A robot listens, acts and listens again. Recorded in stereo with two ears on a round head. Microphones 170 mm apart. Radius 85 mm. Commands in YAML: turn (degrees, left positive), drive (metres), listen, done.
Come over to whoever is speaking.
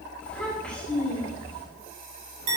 turn: 30
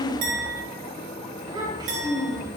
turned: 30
turn: -25
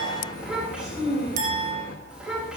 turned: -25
drive: 1.0
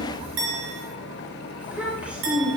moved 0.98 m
drive: 1.0
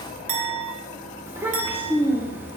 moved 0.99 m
turn: -15
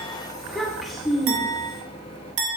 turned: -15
drive: 1.0
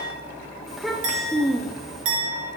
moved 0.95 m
drive: 1.0
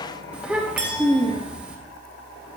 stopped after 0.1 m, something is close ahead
done: "I am next to the child speaking."